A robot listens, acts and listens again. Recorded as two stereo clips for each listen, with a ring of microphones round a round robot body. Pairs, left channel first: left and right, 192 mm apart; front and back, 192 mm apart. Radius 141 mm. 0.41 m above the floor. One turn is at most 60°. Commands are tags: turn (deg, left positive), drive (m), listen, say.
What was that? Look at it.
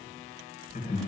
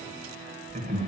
<turn deg="60"/>
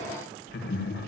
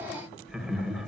<turn deg="60"/>
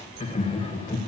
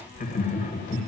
<turn deg="35"/>
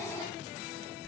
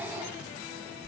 <turn deg="10"/>
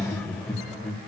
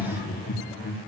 <say>Facing the laughter, 1 to 2 m away.</say>